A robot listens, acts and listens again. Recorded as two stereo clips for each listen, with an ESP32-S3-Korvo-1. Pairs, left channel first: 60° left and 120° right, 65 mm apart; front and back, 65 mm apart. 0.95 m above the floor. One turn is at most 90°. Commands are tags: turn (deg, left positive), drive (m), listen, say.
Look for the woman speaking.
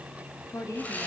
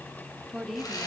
<turn deg="90"/>
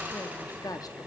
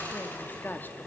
<turn deg="55"/>
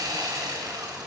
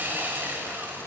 <listen/>
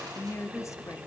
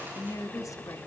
<turn deg="25"/>
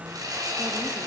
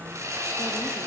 <listen/>
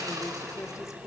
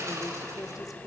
<turn deg="25"/>
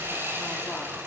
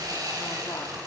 <listen/>
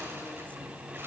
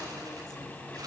<listen/>
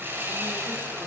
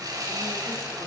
<say>I heard a woman speaking from this way, but can't make it out now.</say>